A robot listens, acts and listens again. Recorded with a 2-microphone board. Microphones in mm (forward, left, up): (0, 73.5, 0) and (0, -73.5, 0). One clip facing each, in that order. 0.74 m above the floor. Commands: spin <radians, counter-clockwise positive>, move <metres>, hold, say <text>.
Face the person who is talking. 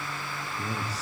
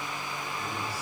spin 1.57
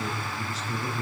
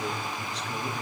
say Found it: a man speaking, straight ahead, over 4 m away.